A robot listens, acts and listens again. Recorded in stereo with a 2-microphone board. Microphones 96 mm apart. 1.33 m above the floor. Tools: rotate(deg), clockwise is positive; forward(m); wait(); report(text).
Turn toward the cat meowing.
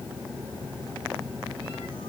wait()
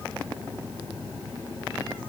wait()
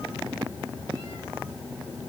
report("I can't make out a cat meowing.")